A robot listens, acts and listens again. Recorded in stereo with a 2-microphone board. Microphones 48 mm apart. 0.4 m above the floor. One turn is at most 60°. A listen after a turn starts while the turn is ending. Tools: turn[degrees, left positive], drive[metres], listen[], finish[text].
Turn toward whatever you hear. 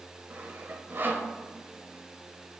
Thought: The sawing: about 50° right or 130° right.
Action: turn[-50]
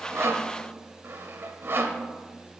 Thought: So it is at 70° right.
Action: turn[-60]
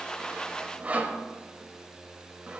Thought: The sawing is now 35° right.
Action: turn[-35]
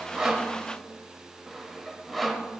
Action: finish[Found it: sawing, straight ahead, 1 to 2 m away.]